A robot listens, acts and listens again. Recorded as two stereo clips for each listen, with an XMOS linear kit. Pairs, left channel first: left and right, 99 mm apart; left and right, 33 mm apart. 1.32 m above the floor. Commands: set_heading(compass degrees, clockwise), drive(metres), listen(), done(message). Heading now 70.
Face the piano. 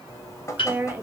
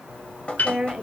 set_heading(10)
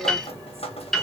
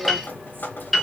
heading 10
done("Facing the piano.")